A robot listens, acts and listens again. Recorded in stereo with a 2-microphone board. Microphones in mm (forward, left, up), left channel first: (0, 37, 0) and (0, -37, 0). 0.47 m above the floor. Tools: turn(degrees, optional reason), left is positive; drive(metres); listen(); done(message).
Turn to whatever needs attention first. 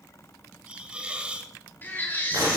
turn(degrees=25, reason="The baby crying: about 25° left or 155° left.")
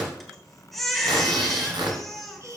done("Facing the baby crying, 1 to 2 m away.")